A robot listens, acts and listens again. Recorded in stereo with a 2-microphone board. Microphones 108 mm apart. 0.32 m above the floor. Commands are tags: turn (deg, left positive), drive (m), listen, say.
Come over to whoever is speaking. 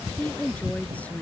<turn deg="30"/>
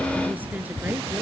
<listen/>
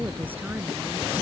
<listen/>
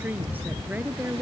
<turn deg="-15"/>
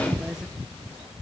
<listen/>
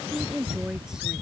<drive m="1.0"/>
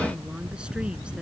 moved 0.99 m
<turn deg="-10"/>
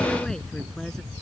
<listen/>
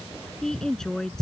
<drive m="1.0"/>
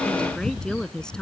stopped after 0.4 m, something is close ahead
<say>Blocked. The woman speaking is further on, straight ahead.</say>